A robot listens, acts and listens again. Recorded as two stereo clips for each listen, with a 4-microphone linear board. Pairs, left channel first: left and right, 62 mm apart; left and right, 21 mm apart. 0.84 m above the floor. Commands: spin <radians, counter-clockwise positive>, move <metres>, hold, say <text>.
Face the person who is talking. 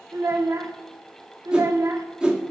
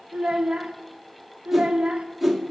spin -1.05
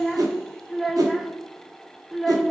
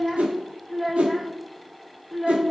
say Facing the child speaking.